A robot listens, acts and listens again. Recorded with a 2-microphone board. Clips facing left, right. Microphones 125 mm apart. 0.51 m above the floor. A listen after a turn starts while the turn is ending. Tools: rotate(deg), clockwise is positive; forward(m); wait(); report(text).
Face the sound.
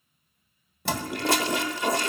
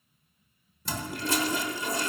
rotate(-70)
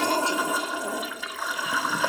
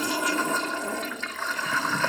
rotate(-10)
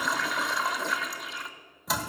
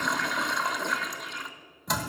report("Found it: a toilet flushing, straight ahead.")